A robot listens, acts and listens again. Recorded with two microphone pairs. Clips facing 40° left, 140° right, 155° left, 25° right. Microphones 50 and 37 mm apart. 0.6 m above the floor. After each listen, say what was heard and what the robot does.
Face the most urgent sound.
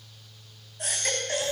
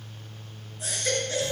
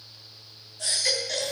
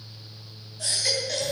The baby crying: 55° left. Turn 55° left.
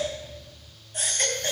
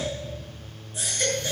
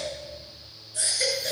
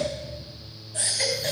Facing the baby crying, 2 to 4 m away.